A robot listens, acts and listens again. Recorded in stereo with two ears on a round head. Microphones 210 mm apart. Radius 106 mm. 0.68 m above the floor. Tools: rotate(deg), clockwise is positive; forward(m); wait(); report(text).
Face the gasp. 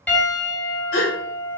rotate(-55)
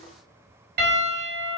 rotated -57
wait()
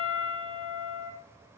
report("I heard a gasp, but can't make it out now. It was about straight ahead or 65° left.")